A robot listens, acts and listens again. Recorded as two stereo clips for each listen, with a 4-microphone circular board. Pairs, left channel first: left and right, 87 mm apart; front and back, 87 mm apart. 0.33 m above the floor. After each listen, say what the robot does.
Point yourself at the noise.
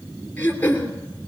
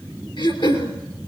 Turn 20° left.
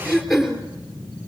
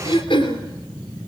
Facing the throat clearing.